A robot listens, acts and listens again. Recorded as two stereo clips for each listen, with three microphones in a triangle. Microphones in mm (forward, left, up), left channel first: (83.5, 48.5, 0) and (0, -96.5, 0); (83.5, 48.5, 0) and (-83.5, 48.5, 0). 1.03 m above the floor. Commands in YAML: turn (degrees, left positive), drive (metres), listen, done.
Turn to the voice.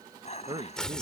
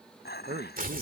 turn: -175
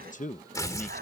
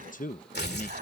turn: 25
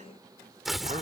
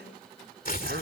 listen: true
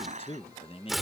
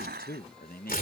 turn: 10
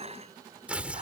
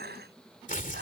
listen: true
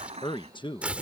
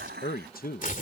done: "Facing the man speaking."